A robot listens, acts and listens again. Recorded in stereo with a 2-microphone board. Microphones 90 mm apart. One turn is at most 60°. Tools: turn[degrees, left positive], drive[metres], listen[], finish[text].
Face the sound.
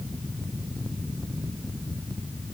Action: listen[]
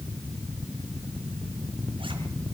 Action: listen[]
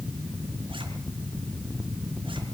Action: finish[I can't make out anything.]